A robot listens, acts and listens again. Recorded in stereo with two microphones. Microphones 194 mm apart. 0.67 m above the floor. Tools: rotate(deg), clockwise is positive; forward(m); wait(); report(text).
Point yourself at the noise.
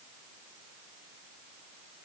wait()
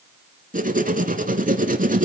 rotate(50)
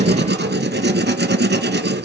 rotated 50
rotate(80)
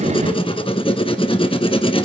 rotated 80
rotate(-30)
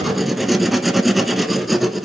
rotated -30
report("Facing the writing.")